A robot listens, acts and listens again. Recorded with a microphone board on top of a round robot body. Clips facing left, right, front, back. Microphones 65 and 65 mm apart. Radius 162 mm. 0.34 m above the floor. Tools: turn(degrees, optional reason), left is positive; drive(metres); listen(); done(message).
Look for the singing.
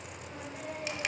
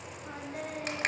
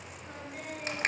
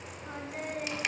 turn(degrees=-120, reason="The singing: 120° right.")
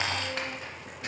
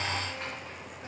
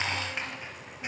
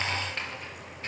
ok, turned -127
listen()
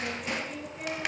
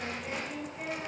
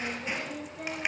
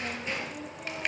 done("Facing the singing.")